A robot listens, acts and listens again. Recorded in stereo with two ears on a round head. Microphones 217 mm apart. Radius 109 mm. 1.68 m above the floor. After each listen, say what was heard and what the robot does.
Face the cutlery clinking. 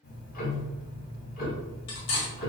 The cutlery clinking: about 55° left or 125° left. Turn 55° left.
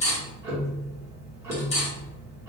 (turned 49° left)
So it is at 35° left. Turn 35° left.
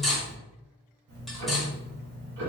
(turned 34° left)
Facing the cutlery clinking.